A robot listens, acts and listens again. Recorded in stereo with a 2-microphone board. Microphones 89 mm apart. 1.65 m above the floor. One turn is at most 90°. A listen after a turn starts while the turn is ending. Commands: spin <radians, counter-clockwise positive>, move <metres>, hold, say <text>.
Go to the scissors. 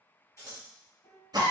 spin 0.61
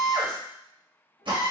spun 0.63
hold
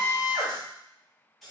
move 1.0
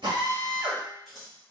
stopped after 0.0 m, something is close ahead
say Something is in my way. I am facing the scissors but have not reached it.